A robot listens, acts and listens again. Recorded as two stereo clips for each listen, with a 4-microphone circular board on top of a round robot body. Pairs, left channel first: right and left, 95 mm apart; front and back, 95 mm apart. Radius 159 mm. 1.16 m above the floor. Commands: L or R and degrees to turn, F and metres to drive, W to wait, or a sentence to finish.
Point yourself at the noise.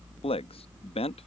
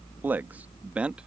R100
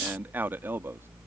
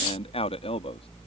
L20
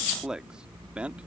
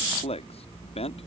L10
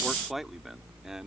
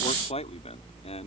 Found it: a man speaking, straight ahead.